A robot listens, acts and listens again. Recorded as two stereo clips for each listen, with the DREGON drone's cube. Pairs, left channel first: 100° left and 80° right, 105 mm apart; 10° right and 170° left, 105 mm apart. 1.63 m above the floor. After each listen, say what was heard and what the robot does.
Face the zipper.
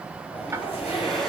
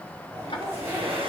The zipper: 105° left. Turn 105° left.
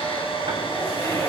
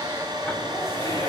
The zipper is now 45° left. Turn 45° left.
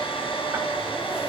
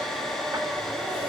Keep listening.
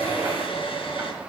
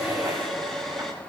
Keep listening.
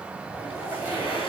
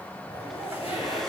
Facing the zipper, over 4 m away.